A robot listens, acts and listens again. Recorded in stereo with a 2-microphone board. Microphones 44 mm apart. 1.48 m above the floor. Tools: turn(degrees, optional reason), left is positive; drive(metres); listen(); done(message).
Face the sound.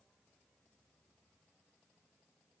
listen()
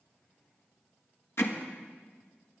turn(degrees=65, reason="The hammering: about 65° left or 115° left.")
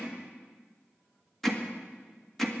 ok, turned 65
done("Facing the hammering, 1 to 2 m away.")